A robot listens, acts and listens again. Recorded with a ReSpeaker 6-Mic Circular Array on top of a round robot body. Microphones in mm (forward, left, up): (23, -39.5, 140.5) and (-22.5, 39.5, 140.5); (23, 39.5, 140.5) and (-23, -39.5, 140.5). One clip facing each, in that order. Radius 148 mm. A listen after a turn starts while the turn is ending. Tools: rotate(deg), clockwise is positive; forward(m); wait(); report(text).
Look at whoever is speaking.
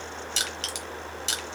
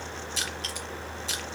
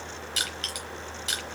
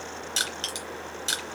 wait()
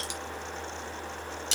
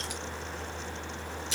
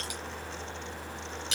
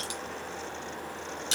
wait()
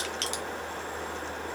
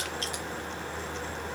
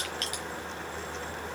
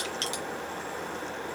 report("I can't make out anyone speaking, only crushing.")